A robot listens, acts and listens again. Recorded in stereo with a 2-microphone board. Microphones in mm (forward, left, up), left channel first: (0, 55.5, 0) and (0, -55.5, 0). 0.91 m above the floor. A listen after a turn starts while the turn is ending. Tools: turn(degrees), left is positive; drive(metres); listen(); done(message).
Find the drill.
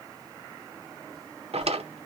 listen()
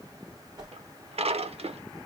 listen()
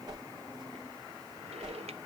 done("I can't make out a drill, only a drawer and a whoosh.")